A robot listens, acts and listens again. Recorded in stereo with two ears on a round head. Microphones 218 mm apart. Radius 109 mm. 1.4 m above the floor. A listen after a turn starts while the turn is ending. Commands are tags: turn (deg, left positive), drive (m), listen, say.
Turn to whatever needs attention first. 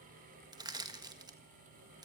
<listen/>
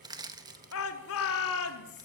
<turn deg="65"/>
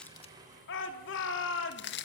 <turn deg="50"/>
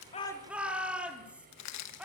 <say>Found it: a shout, straight ahead, over 4 m away.</say>